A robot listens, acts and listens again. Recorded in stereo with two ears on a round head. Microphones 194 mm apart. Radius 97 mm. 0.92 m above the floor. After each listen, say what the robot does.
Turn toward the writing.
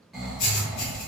Turn 55° left.
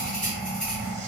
Facing the writing.